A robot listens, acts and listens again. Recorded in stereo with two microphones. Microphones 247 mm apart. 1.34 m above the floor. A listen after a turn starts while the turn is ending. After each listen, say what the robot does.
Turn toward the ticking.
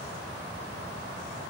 Keep listening.
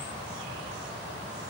Keep listening.
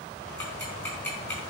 Turn 30° left.
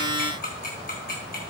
Turn 140° left.
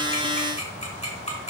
Turn 25° left.
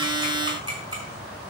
Turn 20° right.
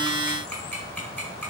Found it: ticking, straight ahead.